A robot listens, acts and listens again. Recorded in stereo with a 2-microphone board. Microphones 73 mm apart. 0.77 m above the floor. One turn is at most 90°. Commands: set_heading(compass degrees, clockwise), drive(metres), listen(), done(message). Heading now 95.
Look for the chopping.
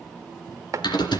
set_heading(140)
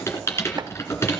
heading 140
listen()
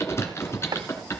set_heading(230)
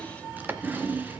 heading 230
set_heading(260)
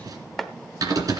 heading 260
done("Facing the chopping.")